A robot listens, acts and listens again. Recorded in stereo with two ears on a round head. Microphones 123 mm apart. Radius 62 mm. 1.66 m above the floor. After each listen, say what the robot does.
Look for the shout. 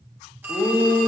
Turn 30° left.
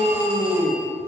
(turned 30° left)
Turn 15° right.
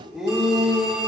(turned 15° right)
Found it: a shout, straight ahead, 1 to 2 m away.